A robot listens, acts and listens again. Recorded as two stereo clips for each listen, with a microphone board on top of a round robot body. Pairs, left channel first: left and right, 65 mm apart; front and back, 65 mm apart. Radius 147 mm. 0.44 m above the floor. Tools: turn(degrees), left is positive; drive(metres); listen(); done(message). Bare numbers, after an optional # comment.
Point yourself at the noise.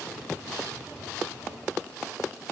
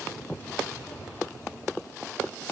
listen()
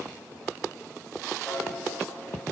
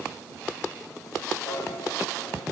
# The piano: 10° left.
turn(10)
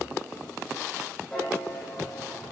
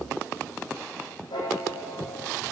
done("Found it: a piano, straight ahead.")